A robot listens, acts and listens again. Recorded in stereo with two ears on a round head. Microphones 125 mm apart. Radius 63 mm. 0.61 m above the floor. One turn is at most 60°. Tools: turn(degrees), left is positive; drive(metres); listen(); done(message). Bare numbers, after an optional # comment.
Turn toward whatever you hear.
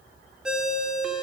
turn(-30)
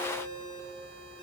# So it is at 140° right.
turn(-60)
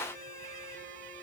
# Nothing new. It was at 80° right.
turn(-60)
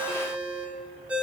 # The ringtone is now 10° right.
turn(-10)
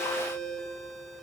done("Found it: a ringtone, straight ahead, 1 to 2 m away.")